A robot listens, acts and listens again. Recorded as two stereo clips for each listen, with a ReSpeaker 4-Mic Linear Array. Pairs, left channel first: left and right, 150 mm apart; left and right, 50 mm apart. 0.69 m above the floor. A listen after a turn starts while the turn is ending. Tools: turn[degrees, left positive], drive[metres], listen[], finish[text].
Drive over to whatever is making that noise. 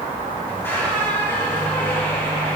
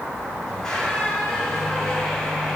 Action: turn[30]
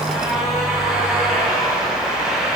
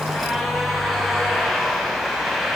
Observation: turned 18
Action: drive[1.0]
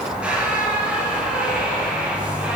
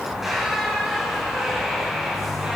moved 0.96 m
Thought: The squeak is now 10° right.
Action: turn[-10]
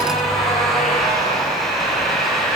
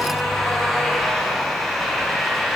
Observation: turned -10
Action: drive[1.0]
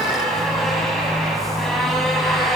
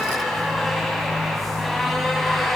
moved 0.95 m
Action: drive[1.0]
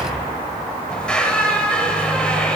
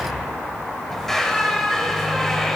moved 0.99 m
Thought: The squeak is now 10° left.
Action: turn[10]
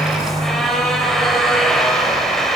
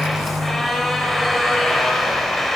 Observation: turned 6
Action: drive[1.0]
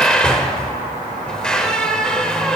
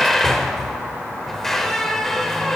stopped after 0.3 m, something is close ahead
Action: finish[I am next to the squeak.]